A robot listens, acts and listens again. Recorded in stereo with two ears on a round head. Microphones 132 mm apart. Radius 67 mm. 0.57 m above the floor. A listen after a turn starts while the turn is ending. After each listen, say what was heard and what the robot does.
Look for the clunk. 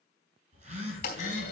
The clunk: about 60° left or 120° left. Turn 60° left.
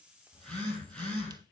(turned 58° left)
Keep listening.
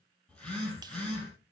I heard a clunk, but can't make it out now. It was about straight ahead or 65° left.